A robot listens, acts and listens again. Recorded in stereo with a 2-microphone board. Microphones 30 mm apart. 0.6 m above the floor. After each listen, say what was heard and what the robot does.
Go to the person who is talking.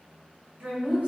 The woman speaking: about 65° right or 115° right. Turn 65° right.
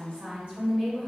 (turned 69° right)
So it is at 40° right. Turn 40° right.
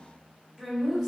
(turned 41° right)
Drive 1.0 m forward.
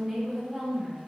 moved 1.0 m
Drive 1.0 m forward.
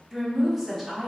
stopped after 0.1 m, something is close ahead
Arrived at the woman speaking, straight ahead.